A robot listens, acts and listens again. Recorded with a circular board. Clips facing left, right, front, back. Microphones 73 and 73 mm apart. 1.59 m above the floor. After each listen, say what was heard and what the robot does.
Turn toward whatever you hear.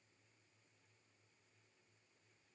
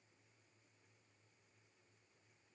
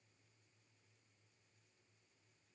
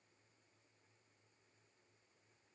Keep listening.
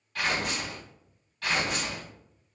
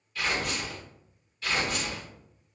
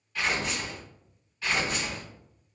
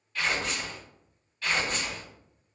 The tearing paper: 80° left. Turn 80° left.
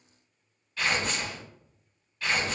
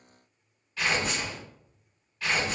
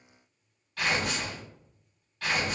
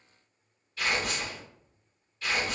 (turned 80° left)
Facing the tearing paper.